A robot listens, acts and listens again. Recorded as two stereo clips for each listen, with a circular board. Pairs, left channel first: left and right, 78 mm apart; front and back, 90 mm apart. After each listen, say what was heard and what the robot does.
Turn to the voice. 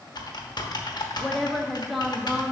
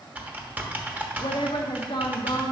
Found it: a woman speaking, straight ahead.